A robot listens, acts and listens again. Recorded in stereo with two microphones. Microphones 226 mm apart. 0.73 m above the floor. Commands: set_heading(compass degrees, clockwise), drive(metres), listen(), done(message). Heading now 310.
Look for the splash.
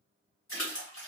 set_heading(240)
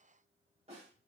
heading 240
listen()
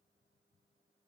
done("I heard a splash, but can't make it out now. It was about straight ahead or 40° left.")